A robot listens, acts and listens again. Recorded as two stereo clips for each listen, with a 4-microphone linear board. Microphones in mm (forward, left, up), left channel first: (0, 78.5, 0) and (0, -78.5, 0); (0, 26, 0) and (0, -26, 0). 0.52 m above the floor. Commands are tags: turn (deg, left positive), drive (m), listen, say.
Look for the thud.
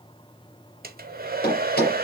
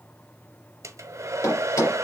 <turn deg="90"/>
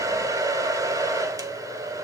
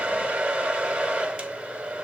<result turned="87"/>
<say>Facing where the thud came from. I can't hear it now.</say>